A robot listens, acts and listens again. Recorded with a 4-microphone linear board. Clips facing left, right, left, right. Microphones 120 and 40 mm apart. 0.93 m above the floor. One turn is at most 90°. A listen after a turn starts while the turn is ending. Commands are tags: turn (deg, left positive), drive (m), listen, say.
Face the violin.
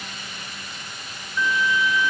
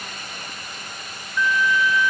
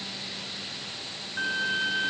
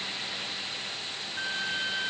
<turn deg="20"/>
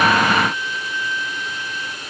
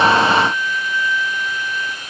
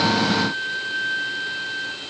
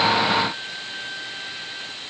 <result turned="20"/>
<turn deg="90"/>
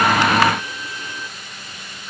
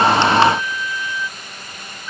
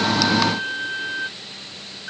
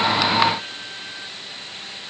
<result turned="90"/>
<turn deg="45"/>
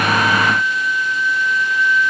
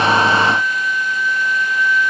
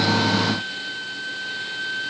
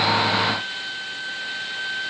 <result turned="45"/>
<say>Found it: a violin, straight ahead.</say>